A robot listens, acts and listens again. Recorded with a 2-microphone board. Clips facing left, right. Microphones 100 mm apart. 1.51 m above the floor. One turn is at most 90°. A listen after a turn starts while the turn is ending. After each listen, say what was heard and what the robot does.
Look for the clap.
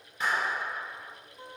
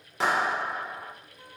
Turn 90° right.
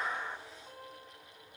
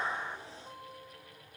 Keep listening.
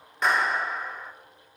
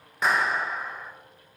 Found it: a clap, straight ahead, 1 to 2 m away.